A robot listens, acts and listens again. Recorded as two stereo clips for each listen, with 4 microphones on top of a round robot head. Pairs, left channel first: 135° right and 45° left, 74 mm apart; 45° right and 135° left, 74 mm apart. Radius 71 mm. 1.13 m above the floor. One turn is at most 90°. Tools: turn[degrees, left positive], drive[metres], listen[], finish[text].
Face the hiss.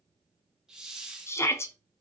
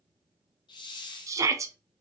Thought: The hiss: 40° right.
Action: turn[-40]
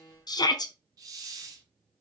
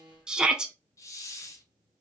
Action: finish[Facing the hiss.]